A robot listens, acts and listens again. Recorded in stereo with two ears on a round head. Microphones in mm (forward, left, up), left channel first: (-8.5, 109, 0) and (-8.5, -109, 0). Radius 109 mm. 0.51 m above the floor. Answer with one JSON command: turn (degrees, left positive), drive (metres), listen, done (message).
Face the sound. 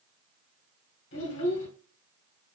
{"turn": 50}
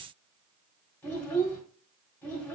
{"done": "Facing the child speaking, 1 to 2 m away."}